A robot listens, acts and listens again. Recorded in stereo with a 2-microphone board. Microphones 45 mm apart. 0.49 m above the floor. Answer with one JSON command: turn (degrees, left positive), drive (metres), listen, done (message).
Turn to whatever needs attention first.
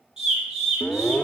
{"turn": 20}
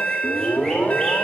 {"turn": 135}
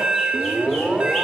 {"turn": -20}
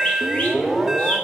{"done": "Found it: an alarm, straight ahead."}